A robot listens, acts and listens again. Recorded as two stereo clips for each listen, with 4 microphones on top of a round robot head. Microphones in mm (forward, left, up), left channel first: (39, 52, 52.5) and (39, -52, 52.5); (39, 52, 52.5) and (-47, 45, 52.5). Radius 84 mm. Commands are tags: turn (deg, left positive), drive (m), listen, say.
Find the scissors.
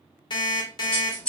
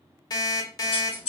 <turn deg="10"/>
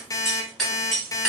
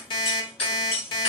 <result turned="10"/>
<say>Facing the scissors, 1 to 2 m away.</say>